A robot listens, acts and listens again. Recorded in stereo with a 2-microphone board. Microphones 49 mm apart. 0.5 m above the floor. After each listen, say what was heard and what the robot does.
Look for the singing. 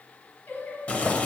The singing: about 35° left or 145° left. Turn 35° left.
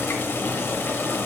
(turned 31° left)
Keep listening.
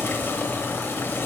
Keep listening.
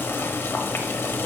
I heard singing, but can't make it out now. It was about 5° left or 115° left.